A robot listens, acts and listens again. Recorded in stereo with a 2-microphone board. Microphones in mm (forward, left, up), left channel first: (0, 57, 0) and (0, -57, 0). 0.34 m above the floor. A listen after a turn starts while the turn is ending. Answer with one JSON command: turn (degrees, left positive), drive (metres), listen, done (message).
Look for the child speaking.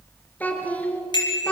{"turn": 30}
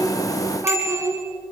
{"turn": -25}
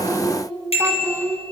{"turn": -25}
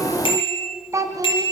{"turn": -30}
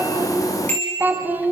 {"turn": -15}
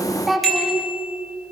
{"done": "Facing the child speaking."}